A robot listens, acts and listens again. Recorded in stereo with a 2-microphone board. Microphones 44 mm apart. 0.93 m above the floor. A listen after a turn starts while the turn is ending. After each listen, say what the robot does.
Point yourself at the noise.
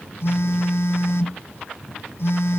Turn 60° left.
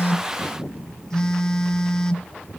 Turn 15° left.
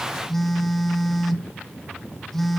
Found it: a phone buzzing, straight ahead.